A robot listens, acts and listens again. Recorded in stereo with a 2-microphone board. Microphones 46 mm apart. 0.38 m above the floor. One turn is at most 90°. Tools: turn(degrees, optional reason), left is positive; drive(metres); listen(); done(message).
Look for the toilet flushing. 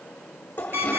turn(degrees=40, reason="The toilet flushing: about 40° left or 140° left.")
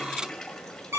turn(degrees=10, reason="So it is at 10° left.")
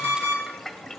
done("Found it: a toilet flushing, straight ahead.")